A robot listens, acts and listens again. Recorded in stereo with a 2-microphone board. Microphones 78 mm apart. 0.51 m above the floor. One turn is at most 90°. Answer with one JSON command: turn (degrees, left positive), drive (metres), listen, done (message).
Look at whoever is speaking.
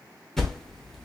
{"listen": true}
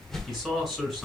{"turn": -30}
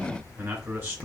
{"listen": true}
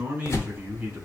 {"turn": -90}
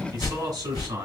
{"turn": -75}
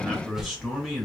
{"done": "Facing the man speaking, 2 to 4 m away."}